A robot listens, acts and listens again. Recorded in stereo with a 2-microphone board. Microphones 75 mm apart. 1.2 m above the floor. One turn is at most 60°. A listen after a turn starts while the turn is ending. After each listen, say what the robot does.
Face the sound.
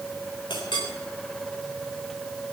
Turn 60° left.
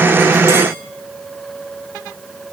Turn 30° left.
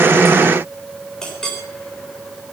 Turn 10° left.
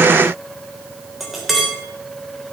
Facing the clink, 2 to 4 m away.